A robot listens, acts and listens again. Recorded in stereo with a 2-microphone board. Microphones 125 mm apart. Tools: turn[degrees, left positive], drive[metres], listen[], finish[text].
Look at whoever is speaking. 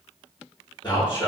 Thought: The man speaking: about 40° left or 140° left.
Action: turn[40]
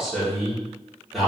Action: finish[Facing the man speaking, 1 to 2 m away.]